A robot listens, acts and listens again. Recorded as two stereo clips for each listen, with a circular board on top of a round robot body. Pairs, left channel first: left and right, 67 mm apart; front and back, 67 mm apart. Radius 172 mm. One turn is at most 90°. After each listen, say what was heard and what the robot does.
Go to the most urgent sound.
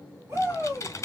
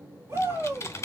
The shout: 140° right. Turn 90° right.
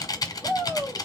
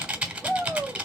The shout is now 75° right. Turn 75° right.
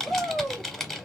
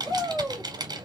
The shout is now 10° right. Turn 10° right.
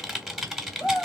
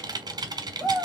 Drive 1.0 m forward.
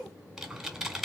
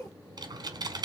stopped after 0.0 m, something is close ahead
Blocked. The shout is further on, straight ahead.